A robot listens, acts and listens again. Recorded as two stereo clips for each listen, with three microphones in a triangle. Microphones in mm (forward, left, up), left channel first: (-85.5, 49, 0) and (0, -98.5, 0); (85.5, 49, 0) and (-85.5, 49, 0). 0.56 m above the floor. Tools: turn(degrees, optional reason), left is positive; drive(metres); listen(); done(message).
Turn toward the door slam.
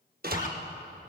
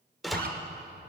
turn(degrees=-90, reason="The door slam: 90° right.")
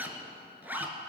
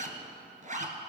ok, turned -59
turn(degrees=-30, reason="Nothing new. It was at 30° right.")
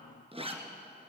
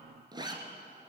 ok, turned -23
turn(degrees=-10, reason="Nothing new. It was at 10° right.")
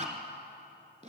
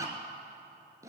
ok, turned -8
done("I heard a door slam from this way, but can't make it out now.")